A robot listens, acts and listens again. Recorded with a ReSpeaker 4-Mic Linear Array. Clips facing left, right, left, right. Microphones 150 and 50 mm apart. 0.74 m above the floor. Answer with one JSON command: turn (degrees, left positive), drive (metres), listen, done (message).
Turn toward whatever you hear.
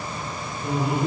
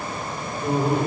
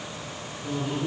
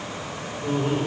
{"turn": -35}
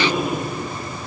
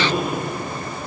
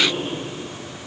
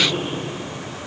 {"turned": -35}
{"done": "Facing the laughter, 2 to 4 m away."}